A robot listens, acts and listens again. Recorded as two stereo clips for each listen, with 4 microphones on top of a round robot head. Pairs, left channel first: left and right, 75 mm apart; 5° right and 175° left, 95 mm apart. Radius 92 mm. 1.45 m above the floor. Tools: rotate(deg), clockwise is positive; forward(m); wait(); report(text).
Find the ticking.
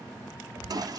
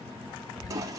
rotate(-40)
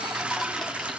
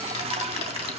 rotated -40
wait()
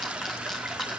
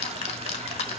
report("Facing the ticking, 1 to 2 m away.")